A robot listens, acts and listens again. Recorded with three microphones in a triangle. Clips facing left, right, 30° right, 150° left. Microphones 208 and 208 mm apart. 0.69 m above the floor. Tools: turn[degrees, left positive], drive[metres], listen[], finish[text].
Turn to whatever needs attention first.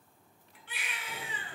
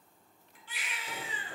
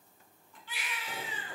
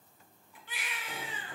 Thought: The baby crying: 115° left.
Action: turn[115]
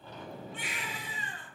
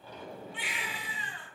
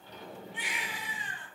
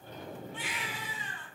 Thought: The baby crying is now 40° left.
Action: turn[40]
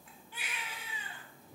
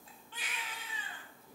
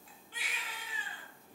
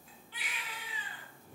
Thought: The baby crying is now 10° left.
Action: turn[10]
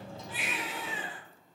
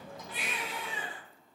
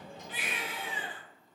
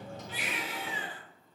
Action: finish[Facing the baby crying.]